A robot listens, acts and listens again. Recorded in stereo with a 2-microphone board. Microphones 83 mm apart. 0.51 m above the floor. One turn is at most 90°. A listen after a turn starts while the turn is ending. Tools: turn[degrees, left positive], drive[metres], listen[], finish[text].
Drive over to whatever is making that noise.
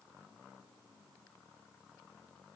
Action: listen[]
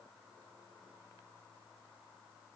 Action: listen[]
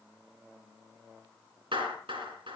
Action: turn[-90]
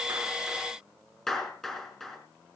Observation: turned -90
Action: drive[1.0]
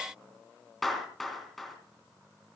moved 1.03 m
Action: drive[1.0]
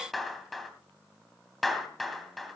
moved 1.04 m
Action: drive[1.0]
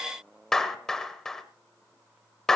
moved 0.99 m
Thought: The clap is now 10° left.
Action: turn[10]
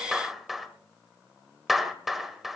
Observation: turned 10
Action: drive[1.0]
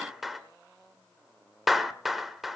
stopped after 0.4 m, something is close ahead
Action: finish[I am next to the clap.]